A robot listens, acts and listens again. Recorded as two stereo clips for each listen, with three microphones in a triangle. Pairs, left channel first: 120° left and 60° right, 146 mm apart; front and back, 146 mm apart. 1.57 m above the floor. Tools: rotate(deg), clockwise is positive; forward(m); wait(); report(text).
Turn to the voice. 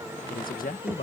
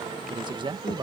rotate(-125)
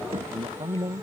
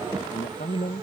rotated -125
report("Found it: a man speaking, straight ahead.")